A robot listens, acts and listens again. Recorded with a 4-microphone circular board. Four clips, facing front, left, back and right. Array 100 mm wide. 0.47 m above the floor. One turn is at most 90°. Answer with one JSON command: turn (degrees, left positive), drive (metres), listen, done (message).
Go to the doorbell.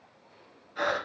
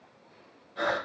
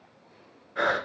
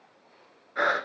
{"listen": true}
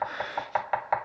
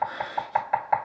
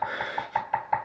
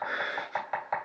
{"listen": true}
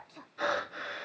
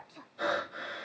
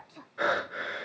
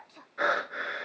{"done": "I can't make out a doorbell, only breathing and knocking."}